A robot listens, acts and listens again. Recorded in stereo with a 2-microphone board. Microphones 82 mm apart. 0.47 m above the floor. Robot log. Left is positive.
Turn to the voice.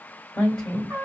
cmd yaw +30
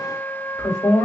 note: So it is at 145° left.
cmd yaw +145
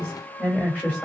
note: The woman speaking is now 25° left.
cmd yaw +25
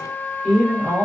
end: Facing the woman speaking.